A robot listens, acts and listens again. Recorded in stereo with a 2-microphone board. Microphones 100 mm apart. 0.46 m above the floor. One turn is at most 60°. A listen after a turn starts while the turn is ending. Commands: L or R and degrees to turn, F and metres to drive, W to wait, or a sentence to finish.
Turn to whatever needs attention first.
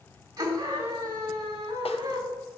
R45
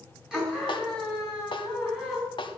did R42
Found it: a scream, straight ahead, 2 to 4 m away.